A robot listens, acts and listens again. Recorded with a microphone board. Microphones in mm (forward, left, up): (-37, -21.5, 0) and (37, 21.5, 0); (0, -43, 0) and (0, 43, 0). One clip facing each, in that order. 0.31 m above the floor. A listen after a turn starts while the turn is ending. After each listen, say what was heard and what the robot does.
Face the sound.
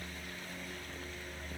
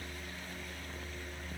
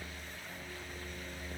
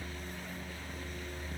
Keep listening.
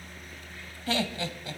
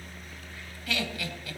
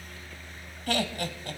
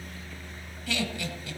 The laughter: 95° right. Turn 95° right.
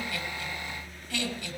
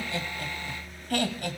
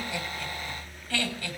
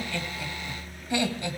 The laughter is now 30° left. Turn 30° left.
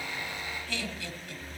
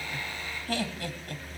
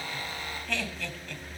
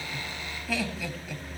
The laughter is now 10° left. Turn 10° left.
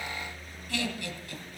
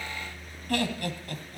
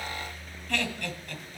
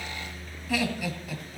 Facing the laughter.